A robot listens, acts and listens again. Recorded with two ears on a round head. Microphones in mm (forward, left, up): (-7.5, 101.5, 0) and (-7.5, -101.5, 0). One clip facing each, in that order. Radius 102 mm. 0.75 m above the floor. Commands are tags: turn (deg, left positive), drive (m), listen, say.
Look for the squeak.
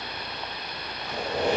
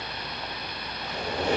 <turn deg="40"/>
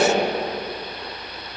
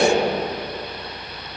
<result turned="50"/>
<turn deg="90"/>
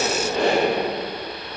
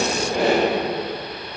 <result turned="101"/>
<turn deg="-10"/>
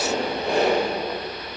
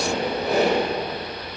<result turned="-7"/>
<say>Found it: a squeak, straight ahead, 2 to 4 m away.</say>